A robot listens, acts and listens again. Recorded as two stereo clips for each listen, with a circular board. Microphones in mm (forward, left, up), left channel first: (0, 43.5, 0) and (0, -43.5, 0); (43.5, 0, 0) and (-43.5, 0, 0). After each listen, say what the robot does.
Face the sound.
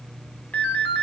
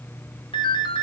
Turn 20° left.
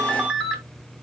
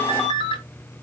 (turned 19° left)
Found it: a ringtone, straight ahead, 1 to 2 m away.